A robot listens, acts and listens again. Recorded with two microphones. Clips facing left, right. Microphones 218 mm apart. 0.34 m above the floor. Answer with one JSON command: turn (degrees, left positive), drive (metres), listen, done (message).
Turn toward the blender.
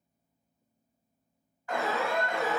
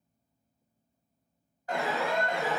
{"listen": true}
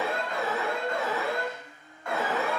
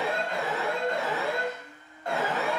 {"turn": 30}
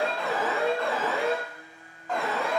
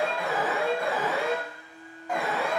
{"turn": 115}
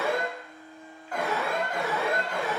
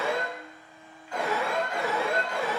{"done": "Found it: a blender, straight ahead, 1 to 2 m away."}